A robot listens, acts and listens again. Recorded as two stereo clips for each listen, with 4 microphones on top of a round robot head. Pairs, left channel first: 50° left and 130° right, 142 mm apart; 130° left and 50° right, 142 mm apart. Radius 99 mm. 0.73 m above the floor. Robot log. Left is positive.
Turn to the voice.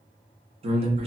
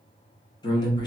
note: The man speaking: 170° right.
cmd yaw -170
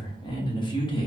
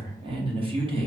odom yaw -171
end: Found it: a man speaking, straight ahead.